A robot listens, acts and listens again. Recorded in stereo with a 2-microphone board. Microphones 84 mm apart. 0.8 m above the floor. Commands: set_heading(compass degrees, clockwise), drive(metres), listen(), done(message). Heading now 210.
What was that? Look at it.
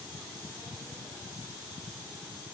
listen()
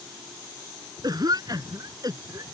set_heading(265)
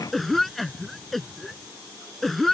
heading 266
done("Found it: a cough, straight ahead.")